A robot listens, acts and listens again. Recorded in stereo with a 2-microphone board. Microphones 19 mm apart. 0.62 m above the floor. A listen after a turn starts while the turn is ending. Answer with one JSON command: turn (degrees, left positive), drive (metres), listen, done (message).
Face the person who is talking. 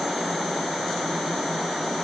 {"listen": true}
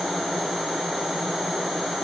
{"listen": true}
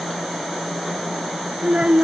{"turn": -65}
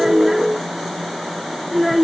{"done": "Facing the child speaking."}